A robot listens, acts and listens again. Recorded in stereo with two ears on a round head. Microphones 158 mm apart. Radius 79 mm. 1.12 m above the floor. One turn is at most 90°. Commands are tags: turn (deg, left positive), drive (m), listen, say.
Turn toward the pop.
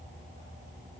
<listen/>
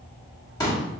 <turn deg="20"/>
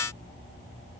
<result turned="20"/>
<listen/>
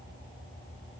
<say>I heard a pop, but can't make it out now. It was about straight ahead or 140° left.</say>